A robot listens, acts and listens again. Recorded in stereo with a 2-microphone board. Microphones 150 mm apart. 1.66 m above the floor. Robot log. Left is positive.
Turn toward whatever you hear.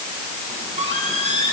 note: The squeak: about 45° right or 135° right.
cmd yaw -45
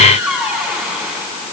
end: Facing the squeak, over 4 m away.